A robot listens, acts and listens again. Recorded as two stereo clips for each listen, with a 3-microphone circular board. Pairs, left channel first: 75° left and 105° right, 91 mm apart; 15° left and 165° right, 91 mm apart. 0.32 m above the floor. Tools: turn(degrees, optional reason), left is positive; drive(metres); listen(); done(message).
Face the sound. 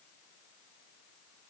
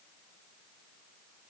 listen()
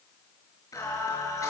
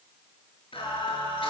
turn(degrees=20, reason="The singing: 20° left.")
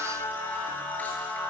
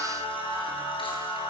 done("Found it: singing, straight ahead, over 4 m away.")